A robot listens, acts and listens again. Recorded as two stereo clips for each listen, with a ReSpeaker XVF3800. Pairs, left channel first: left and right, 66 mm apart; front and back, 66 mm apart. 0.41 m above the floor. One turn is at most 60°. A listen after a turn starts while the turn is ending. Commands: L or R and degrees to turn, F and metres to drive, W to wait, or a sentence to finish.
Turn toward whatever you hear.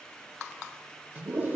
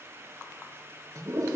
R60
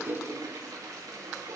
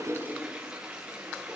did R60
R60
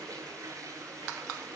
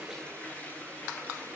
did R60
R60
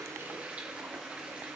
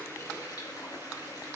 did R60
R20
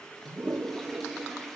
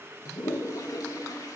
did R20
Found it: a toilet flushing, straight ahead.